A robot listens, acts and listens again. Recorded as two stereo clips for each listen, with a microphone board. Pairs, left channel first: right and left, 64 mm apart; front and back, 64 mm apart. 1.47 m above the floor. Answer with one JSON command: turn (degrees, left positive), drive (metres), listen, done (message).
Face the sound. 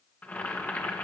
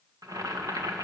{"turn": -155}
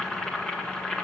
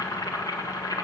{"turn": -10}
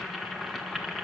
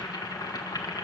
{"done": "Found it: boiling, straight ahead, 1 to 2 m away."}